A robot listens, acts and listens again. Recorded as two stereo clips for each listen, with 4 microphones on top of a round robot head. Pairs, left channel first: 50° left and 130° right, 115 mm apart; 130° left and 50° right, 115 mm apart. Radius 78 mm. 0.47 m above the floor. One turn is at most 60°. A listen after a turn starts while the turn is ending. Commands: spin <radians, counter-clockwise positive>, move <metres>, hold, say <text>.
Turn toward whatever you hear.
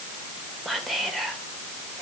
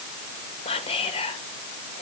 spin 1.05
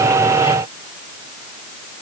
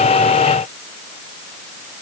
spin 1.05
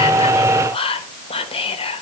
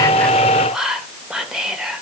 spin 0.61
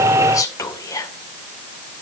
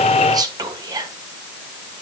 say Found it: whispering, straight ahead.